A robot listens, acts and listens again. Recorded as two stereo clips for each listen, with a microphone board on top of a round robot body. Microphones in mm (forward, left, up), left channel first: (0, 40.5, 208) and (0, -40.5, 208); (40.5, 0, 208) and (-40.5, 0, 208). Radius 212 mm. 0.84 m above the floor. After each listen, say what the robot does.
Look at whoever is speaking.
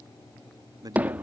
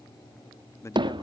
Turn 50° right.
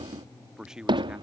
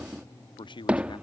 Facing the man speaking.